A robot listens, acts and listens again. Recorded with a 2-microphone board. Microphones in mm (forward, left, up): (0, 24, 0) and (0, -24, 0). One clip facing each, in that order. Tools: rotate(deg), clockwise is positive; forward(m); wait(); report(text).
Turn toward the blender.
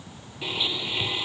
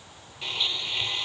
rotate(-30)
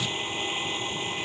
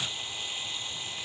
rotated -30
rotate(-145)
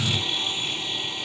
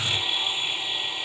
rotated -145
rotate(10)
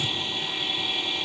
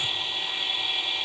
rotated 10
report("Facing the blender.")